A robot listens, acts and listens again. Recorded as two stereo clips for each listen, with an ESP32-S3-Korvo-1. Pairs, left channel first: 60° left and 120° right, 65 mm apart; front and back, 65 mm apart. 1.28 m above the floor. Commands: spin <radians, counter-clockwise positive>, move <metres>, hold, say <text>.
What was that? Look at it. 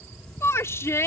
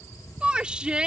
spin 1.83
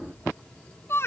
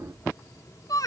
spin 0.17
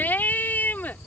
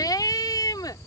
say Found it: a shout, straight ahead.